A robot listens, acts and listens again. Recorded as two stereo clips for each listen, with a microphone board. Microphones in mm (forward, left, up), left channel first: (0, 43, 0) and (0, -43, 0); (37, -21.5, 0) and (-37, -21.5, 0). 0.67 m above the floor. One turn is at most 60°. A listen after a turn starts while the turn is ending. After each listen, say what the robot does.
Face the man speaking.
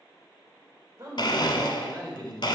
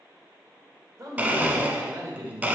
Turn 60° right.
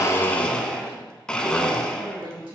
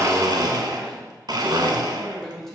Turn 60° right.
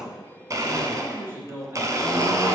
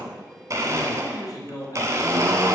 Turn 30° right.
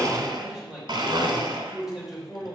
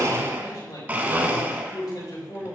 Found it: a man speaking, straight ahead, 2 to 4 m away.